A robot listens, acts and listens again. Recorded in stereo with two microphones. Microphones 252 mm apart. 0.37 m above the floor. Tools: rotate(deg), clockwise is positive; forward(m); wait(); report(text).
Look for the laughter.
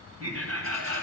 rotate(65)
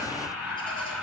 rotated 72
report("Found it: laughter, straight ahead.")